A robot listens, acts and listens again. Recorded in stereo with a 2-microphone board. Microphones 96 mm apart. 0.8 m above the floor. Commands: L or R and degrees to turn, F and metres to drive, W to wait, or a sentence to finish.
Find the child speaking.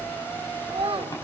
R90
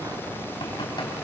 W
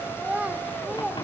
R10
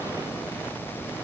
W
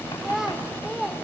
Facing the child speaking, 1 to 2 m away.